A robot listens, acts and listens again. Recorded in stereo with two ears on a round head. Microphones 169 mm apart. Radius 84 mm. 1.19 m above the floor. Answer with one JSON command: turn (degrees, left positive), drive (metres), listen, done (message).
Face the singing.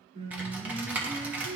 {"turn": -90}
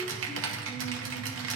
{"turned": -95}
{"listen": true}
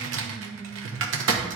{"done": "Found it: singing, straight ahead, 2 to 4 m away."}